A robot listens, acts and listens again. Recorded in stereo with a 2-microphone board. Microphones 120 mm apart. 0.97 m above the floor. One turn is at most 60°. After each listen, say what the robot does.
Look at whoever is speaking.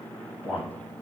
Turn 30° left.
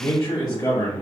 Turn 60° left.
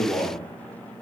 Turn 60° left.
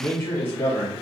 Turn 20° left.
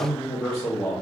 Facing the man speaking, 1 to 2 m away.